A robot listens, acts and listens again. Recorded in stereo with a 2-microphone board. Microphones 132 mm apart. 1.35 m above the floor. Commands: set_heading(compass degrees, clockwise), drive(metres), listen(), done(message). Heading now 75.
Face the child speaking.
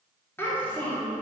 set_heading(45)
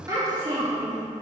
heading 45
set_heading(80)
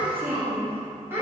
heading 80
set_heading(100)
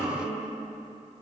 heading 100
done("Facing the child speaking.")